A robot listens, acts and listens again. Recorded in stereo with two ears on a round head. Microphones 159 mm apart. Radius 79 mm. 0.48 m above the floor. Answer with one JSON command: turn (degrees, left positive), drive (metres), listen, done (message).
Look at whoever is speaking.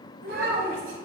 {"turn": -90}
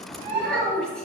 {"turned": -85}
{"done": "Found it: a child speaking, straight ahead, 2 to 4 m away."}